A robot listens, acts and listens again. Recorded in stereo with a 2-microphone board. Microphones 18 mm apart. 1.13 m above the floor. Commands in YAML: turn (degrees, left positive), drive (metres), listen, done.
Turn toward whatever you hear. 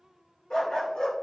turn: 55
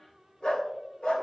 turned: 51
turn: 65
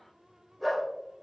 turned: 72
done: "Facing the dog barking."